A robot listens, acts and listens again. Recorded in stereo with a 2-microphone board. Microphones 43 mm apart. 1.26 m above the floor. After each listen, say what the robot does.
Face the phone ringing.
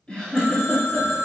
Turn 70° left.
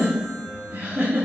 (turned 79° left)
Keep listening.
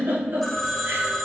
Found it: a phone ringing, straight ahead, under 1 m away.